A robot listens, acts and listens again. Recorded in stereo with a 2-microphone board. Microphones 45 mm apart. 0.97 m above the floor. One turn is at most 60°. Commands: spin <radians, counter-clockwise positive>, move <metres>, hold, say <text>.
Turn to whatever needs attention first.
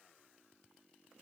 hold
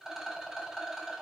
hold
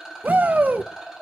spin -0.70
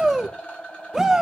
spin -0.26
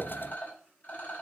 hold
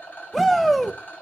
say Found it: a shout, straight ahead.